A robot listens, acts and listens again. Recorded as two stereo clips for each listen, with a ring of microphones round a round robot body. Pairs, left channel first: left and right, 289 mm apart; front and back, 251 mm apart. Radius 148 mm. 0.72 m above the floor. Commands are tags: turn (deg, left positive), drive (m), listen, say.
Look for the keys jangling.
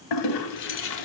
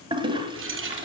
<turn deg="135"/>
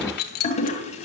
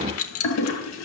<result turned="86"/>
<turn deg="30"/>
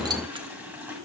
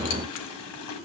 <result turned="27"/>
<listen/>
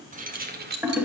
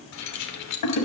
<turn deg="-30"/>
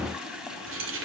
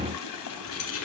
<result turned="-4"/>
<turn deg="-45"/>
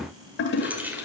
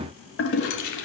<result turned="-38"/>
<say>Facing the keys jangling.</say>